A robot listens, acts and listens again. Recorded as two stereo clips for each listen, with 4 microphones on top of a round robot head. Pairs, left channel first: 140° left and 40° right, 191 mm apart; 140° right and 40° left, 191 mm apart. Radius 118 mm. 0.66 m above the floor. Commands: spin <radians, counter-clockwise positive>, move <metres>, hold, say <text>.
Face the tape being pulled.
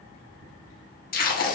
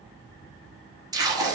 spin 1.92
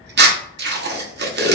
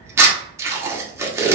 spin -0.61
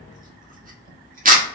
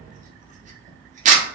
say Facing the tape being pulled, 1 to 2 m away.